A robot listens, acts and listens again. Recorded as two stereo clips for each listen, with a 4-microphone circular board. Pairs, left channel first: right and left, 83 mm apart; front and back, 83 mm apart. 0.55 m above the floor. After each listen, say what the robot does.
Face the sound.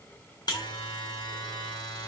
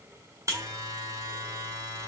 Turn 130° right.
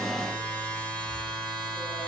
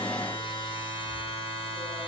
Turn 15° right.
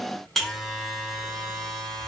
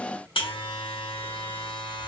Facing the buzzer.